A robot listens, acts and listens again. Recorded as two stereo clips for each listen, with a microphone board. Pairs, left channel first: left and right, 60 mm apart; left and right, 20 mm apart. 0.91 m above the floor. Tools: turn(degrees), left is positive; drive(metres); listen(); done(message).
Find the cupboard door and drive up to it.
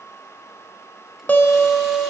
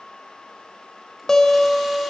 listen()
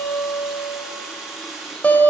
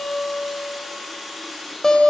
listen()
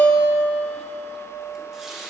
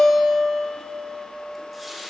done("I can't make out a cupboard door to turn to.")